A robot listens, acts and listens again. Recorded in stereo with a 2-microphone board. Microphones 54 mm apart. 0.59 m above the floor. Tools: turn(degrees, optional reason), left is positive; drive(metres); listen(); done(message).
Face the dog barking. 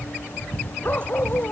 turn(degrees=30, reason="The dog barking: about 30° left or 150° left.")
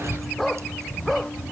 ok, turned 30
done("Found it: a dog barking, straight ahead.")